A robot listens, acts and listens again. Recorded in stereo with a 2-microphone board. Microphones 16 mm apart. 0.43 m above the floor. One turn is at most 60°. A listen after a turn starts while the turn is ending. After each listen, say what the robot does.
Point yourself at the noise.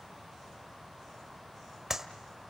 Turn 25° right.
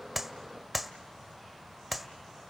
Found it: a clap, straight ahead, 1 to 2 m away.